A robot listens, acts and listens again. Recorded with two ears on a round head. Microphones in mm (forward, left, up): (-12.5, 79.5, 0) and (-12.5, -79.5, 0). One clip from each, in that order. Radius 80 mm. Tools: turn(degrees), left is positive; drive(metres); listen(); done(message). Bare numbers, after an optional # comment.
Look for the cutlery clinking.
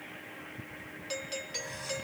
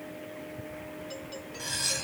turn(-90)
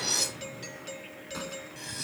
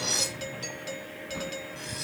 done("Found it: cutlery clinking, straight ahead.")